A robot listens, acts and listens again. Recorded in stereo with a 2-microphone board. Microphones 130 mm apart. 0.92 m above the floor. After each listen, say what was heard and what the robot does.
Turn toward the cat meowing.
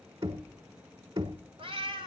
The cat meowing: about 45° right or 135° right. Turn 45° right.
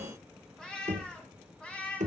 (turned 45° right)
So it is at 10° left. Turn 10° left.
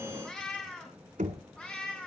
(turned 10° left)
The cat meowing is now 10° left. Turn 10° left.
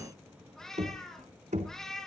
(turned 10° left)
Found it: a cat meowing, straight ahead, over 4 m away.